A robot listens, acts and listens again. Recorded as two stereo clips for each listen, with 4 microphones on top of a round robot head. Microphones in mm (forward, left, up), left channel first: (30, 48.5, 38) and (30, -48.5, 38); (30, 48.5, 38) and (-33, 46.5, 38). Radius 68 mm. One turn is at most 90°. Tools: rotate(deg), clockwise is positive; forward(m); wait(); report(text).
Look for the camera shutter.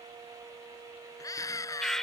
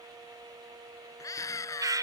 wait()
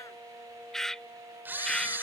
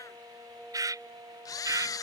rotate(20)
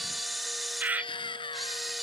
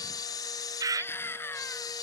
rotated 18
report("Facing the camera shutter.")